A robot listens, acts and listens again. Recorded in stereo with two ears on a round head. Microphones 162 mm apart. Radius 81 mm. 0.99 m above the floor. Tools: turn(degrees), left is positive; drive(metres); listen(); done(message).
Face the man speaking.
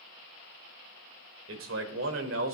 turn(degrees=-90)
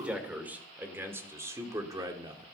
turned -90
turn(degrees=-25)
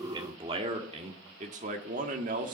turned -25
turn(degrees=-45)
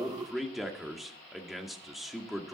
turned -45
done("Found it: a man speaking, straight ahead.")